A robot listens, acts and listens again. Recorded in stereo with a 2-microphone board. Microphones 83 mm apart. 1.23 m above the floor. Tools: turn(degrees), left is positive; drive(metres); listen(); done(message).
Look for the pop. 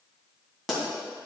turn(degrees=30)
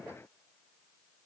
listen()
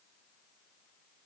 done("I heard a pop, but can't make it out now. It was about 30° right or 150° left.")